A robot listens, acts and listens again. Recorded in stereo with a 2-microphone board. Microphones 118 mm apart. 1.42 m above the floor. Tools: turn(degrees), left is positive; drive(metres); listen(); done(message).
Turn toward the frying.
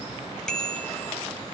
listen()
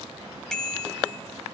listen()
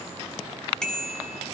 done("I can't make out frying, only a bicycle bell.")